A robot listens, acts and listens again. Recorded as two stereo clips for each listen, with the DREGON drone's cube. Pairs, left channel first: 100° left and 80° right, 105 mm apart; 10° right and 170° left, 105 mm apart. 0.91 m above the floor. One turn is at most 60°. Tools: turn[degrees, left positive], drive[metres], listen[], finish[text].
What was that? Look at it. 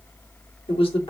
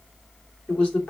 Thought: The man speaking: 65° left.
Action: turn[60]
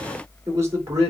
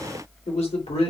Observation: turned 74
Thought: The man speaking is now 20° right.
Action: turn[-20]
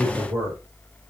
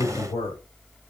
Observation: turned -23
Action: finish[Found it: a man speaking, straight ahead, 2 to 4 m away.]